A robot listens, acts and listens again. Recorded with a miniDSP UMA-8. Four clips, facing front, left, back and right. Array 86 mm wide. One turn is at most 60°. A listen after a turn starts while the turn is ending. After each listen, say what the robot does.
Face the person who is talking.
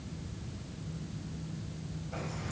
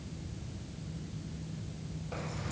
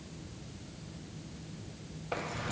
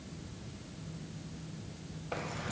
Keep listening.
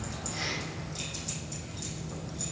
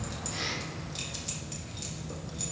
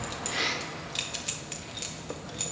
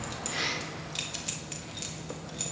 Keep listening.
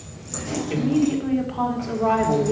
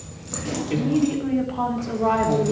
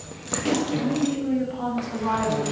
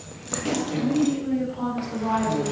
Turn 50° left.
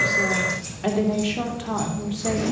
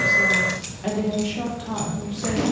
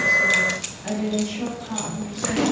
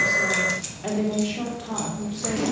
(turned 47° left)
Found it: a woman speaking, straight ahead.